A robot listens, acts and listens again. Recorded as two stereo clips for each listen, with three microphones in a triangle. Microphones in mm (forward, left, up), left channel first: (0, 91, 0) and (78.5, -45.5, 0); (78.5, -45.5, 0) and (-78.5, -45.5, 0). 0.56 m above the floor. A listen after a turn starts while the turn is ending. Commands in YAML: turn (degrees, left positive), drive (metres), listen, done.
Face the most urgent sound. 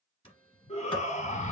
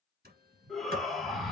turn: 90
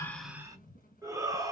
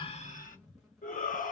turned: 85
done: "Facing the shout."